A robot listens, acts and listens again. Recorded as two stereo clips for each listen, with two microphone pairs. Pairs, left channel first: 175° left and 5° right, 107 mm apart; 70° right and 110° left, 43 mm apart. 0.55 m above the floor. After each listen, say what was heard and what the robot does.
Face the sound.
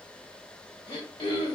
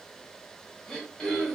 The throat clearing: 145° right. Turn 145° right.
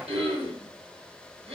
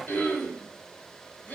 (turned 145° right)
The throat clearing is now 35° right. Turn 35° right.
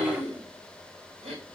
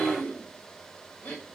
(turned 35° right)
The throat clearing is now 15° right. Turn 15° right.
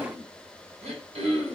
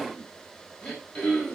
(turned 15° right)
Found it: throat clearing, straight ahead, 1 to 2 m away.